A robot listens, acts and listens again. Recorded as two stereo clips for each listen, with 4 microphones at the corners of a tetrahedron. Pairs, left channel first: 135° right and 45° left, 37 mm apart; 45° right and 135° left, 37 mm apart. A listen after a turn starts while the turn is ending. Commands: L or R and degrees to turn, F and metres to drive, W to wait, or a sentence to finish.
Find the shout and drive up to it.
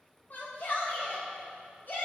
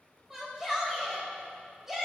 R145
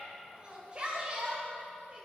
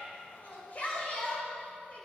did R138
R10
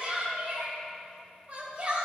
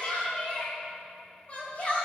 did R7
F1.0
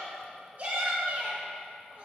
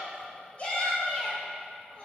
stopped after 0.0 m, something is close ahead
Blocked. The shout is further on, straight ahead.